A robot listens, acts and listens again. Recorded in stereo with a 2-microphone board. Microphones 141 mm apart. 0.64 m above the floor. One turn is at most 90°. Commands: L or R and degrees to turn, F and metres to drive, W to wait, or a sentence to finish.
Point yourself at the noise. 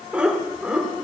R30
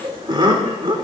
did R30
R90
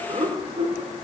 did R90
R50
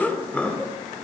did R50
L10
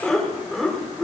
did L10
Found it: laughter, straight ahead.